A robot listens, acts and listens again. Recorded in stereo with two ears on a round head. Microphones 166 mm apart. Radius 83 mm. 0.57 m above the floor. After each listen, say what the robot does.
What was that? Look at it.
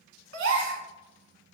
Turn 70° right.
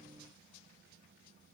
Keep listening.
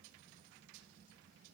I heard a gasp, but can't make it out now. It was about straight ahead or 40° right.